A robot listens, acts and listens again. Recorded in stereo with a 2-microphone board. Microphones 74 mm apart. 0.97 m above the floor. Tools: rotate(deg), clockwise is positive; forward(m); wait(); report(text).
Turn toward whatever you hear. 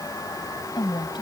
rotate(-90)
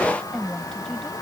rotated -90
report("Found it: a woman speaking, straight ahead.")